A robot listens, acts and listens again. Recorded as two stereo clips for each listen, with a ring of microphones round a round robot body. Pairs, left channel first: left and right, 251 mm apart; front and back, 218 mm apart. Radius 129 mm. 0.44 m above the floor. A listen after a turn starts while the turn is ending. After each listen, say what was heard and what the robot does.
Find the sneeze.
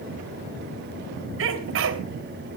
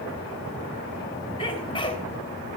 The sneeze: 65° right. Turn 65° right.
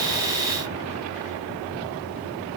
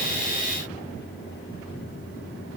Facing where the sneeze came from. I can't hear it now.